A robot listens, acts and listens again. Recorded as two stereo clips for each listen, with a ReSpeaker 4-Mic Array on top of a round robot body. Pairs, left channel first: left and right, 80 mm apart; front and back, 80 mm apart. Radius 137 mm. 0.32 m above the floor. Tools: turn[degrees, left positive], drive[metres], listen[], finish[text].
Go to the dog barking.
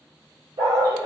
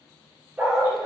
Thought: The dog barking: 110° right.
Action: turn[-110]
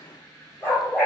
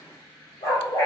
Thought: The dog barking is now 25° left.
Action: turn[25]
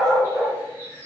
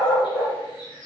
Action: drive[1.0]
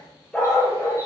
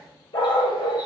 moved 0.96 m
Thought: The dog barking is now 10° left.
Action: turn[10]
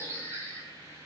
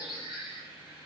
Action: listen[]
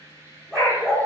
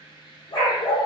Action: drive[1.0]
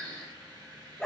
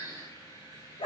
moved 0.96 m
Action: drive[1.0]
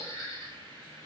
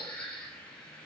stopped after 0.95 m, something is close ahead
Action: listen[]
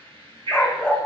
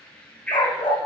Thought: The dog barking is now 10° left.
Action: turn[10]
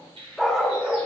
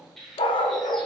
Action: finish[I am next to the dog barking.]